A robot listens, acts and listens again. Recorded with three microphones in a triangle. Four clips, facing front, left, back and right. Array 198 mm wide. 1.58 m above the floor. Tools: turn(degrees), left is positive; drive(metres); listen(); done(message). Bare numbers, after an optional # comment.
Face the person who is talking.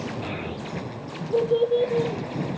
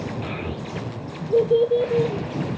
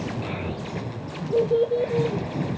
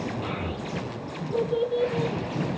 # The child speaking: 95° left.
turn(95)
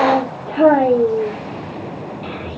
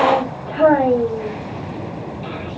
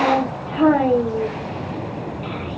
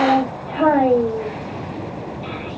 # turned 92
done("Facing the child speaking, 1 to 2 m away.")